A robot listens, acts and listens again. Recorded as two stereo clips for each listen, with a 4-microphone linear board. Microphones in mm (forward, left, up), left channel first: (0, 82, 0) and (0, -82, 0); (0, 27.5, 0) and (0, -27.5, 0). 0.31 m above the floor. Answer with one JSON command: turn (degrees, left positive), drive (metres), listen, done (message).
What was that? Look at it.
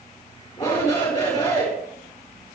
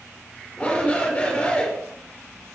{"turn": 20}
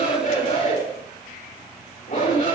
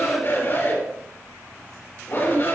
{"turn": 140}
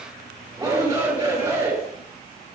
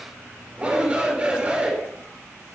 {"turn": -20}
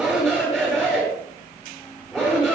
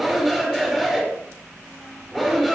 {"done": "Facing the shout, over 4 m away."}